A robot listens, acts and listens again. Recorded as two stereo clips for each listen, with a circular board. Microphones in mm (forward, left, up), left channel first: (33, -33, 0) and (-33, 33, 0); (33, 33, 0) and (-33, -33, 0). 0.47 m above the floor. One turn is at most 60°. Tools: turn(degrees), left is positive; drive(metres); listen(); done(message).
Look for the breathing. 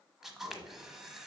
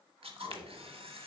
turn(degrees=-60)
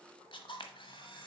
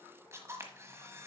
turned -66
turn(degrees=-15)
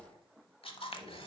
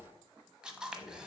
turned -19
done("Found it: breathing, straight ahead, 1 to 2 m away.")